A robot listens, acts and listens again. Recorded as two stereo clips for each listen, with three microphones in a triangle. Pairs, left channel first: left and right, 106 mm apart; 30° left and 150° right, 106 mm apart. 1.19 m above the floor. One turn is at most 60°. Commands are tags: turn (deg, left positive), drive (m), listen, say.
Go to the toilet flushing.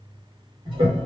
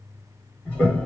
<turn deg="-45"/>
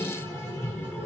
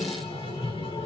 <turn deg="25"/>
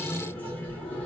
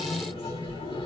<turn deg="20"/>
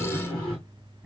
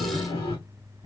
<drive m="1.0"/>
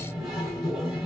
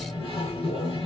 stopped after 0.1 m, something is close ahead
<say>Something is in my way. I am facing the toilet flushing but have not reached it.</say>